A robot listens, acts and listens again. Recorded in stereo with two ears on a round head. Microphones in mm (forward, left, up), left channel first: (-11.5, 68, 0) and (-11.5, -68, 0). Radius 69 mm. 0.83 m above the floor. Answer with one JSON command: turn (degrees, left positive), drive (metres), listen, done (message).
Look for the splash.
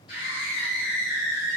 {"listen": true}
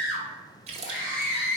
{"turn": -45}
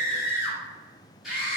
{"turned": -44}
{"listen": true}
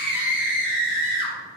{"done": "I heard a splash, but can't make it out now. It was about straight ahead or 90° right."}